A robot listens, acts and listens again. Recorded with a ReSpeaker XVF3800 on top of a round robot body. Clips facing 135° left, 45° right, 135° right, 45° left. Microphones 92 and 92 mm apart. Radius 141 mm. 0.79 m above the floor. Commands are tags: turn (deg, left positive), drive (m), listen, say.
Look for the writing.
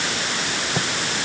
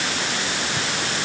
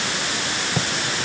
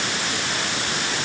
<turn deg="-175"/>
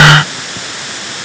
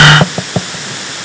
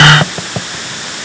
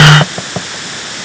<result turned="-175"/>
<turn deg="-35"/>
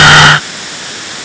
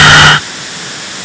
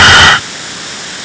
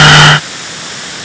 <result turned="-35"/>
<listen/>
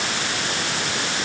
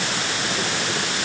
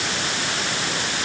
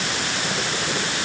<listen/>
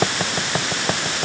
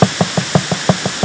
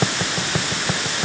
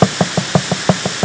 <turn deg="10"/>
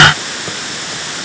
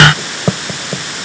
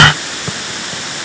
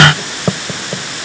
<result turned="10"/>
<say>Facing the writing.</say>